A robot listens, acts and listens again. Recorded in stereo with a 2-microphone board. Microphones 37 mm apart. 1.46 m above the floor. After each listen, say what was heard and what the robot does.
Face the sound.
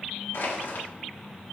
Turn 90° left.
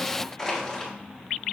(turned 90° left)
So it is at 10° left. Turn 10° left.
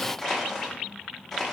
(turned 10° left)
Facing the crushing.